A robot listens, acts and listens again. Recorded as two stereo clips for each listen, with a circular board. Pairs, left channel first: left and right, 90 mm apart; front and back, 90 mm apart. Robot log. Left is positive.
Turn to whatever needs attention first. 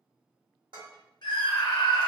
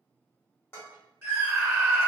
note: The scream: 120° left.
cmd yaw +120
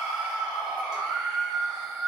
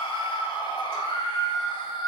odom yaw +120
end: Found it: a scream, straight ahead.